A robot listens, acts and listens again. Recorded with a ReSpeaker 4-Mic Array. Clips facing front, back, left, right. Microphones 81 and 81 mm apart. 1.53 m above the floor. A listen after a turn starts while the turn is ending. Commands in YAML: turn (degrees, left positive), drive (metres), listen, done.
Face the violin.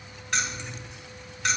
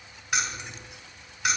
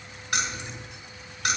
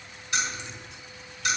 listen: true
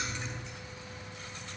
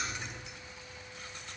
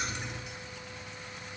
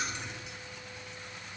listen: true
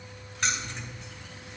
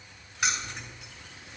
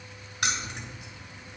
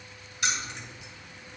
done: "I can't make out a violin, only keys jangling."